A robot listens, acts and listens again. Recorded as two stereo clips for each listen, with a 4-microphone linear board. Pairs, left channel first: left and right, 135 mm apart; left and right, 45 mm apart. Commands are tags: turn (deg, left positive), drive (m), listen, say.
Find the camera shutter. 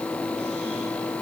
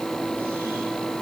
<listen/>
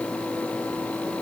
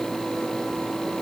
<listen/>
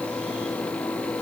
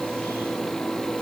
<say>I can't make out a camera shutter.</say>